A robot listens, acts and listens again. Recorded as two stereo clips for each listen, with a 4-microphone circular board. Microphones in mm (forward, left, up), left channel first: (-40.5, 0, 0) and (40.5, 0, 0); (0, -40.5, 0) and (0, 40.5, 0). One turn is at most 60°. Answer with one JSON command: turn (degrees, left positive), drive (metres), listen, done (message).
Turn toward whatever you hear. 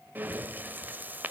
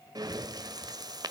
{"turn": 60}
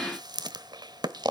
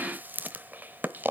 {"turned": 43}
{"turn": 25}
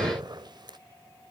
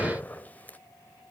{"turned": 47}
{"turn": -20}
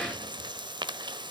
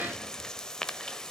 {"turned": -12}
{"turn": -10}
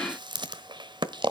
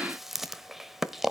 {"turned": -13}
{"done": "Facing the breathing."}